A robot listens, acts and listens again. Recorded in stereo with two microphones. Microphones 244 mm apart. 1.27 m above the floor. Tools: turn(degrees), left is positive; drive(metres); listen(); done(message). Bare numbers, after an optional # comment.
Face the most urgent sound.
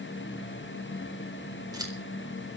listen()
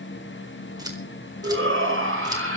# The shout: about 55° right or 125° right.
turn(-55)
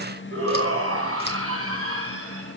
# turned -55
# So it is at 65° right.
turn(-65)
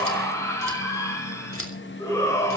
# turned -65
# The shout is now 10° left.
turn(10)
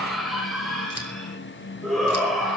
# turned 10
done("Facing the shout.")